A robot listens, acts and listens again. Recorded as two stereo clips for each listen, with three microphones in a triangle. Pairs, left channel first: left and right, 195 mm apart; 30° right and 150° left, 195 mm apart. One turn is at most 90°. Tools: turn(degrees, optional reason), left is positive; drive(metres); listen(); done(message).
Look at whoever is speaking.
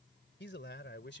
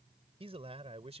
turn(degrees=90, reason="The man speaking: 95° left.")
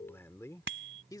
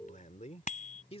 turn(degrees=25, reason="The man speaking is now 25° left.")
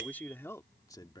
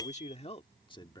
turn(degrees=30, reason="The man speaking is now 30° left.")
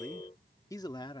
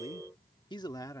turn(degrees=40, reason="The man speaking is now 40° left.")
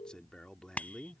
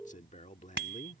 done("Found it: a man speaking, straight ahead.")